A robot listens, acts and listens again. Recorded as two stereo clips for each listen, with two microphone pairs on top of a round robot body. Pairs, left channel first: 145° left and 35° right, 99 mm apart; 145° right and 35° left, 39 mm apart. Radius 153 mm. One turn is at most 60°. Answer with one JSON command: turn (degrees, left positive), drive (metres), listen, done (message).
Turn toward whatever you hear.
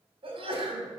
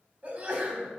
{"turn": -10}
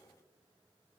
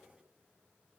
{"done": "Facing where the sneeze came from. I can't hear it now."}